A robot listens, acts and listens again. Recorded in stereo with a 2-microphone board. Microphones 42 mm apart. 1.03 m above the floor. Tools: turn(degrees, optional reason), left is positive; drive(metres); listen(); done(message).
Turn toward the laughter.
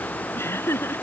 turn(degrees=90)
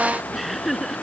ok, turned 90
done("Found it: laughter, straight ahead.")